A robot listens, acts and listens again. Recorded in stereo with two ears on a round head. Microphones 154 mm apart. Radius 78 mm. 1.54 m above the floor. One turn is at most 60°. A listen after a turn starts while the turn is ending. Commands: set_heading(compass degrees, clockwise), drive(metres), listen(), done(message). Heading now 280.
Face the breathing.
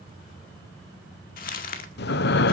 set_heading(220)
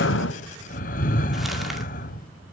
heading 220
set_heading(170)
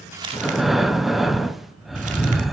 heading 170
done("Facing the breathing.")